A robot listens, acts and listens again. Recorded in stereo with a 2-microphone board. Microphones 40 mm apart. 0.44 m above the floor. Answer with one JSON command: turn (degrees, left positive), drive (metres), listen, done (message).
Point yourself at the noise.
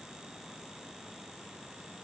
{"listen": true}
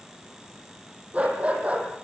{"turn": -35}
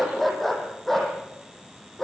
{"turn": 10}
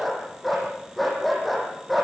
{"done": "Facing the dog barking."}